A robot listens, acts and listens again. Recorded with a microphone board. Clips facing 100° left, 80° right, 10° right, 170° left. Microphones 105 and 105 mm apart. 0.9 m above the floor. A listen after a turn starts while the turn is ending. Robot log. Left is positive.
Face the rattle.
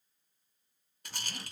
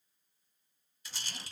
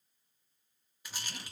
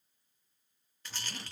note: The rattle: 65° left.
cmd yaw +65
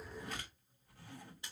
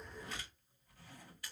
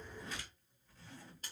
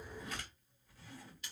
note: The rattle is now 35° left.
cmd yaw +35
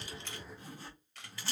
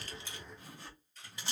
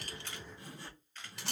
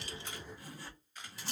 note: The rattle is now 10° right.
cmd yaw -10
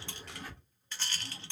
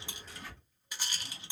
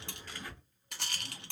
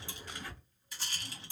end: Facing the rattle, under 1 m away.